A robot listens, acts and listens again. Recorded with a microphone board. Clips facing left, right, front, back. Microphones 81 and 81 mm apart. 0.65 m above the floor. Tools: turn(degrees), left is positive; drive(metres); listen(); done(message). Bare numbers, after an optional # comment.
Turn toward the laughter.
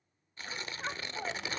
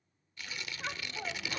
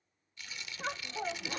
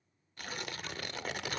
# The laughter: 10° left.
turn(10)
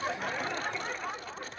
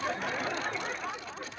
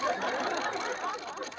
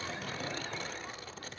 done("Facing the laughter, 1 to 2 m away.")